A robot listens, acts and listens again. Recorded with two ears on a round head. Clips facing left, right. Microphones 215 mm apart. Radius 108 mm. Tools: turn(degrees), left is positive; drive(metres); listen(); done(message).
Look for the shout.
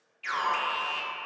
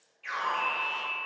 listen()
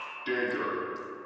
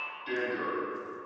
listen()
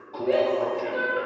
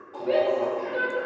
turn(degrees=30)
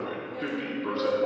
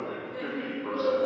turn(degrees=-35)
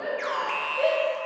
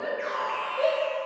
done("Found it: a shout, straight ahead.")